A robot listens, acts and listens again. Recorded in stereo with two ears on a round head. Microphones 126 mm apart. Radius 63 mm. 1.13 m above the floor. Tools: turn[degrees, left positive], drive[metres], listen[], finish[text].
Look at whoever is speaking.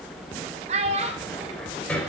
Thought: The child speaking: about 50° right or 130° right.
Action: turn[-50]
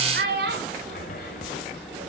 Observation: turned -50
Thought: So it is at 80° right.
Action: turn[-80]
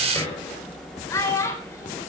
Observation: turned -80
Thought: The child speaking is now 20° left.
Action: turn[20]
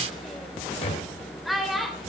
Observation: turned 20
Action: finish[Facing the child speaking, 2 to 4 m away.]